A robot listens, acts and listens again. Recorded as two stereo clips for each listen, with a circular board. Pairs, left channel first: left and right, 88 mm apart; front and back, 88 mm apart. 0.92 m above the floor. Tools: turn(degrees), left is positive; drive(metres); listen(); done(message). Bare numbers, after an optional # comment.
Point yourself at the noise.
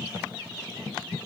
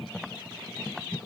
listen()
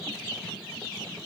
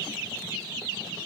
listen()
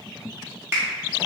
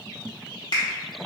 # The finger snap: 30° right.
turn(-30)
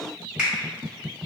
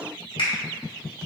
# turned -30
# The finger snap is now 10° right.
turn(-10)
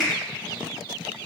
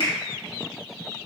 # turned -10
done("Found it: a finger snap, straight ahead, 1 to 2 m away.")